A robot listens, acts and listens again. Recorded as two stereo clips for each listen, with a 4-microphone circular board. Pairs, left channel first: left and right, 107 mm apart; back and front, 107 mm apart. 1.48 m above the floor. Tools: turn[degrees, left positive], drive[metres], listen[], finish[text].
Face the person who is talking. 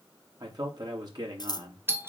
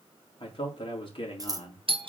Thought: The man speaking: 140° right.
Action: turn[-140]
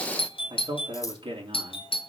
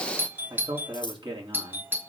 Thought: The man speaking is now 45° right.
Action: turn[-45]
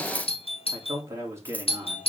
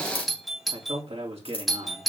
Thought: The man speaking is now 25° right.
Action: turn[-25]
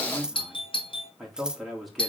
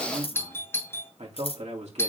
Action: finish[Found it: a man speaking, straight ahead.]